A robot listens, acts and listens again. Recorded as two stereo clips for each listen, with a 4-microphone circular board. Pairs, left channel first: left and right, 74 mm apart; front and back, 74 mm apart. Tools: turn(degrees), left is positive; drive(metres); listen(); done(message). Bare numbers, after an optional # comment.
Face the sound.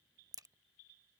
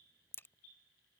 # The crack: 55° right.
turn(-55)
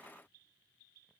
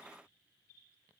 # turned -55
done("I heard a crack from this way, but can't make it out now.")